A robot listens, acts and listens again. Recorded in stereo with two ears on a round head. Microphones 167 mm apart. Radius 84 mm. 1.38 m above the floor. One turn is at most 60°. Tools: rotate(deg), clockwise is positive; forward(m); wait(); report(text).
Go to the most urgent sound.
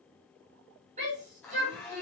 rotate(40)
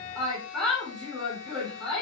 forward(1.0)
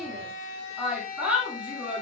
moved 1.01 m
forward(1.0)
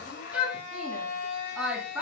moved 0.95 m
forward(1.0)
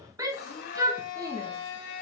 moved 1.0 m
rotate(20)
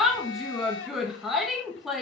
forward(1.0)
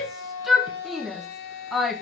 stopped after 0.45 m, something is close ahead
report("Arrived at the shout, straight ahead.")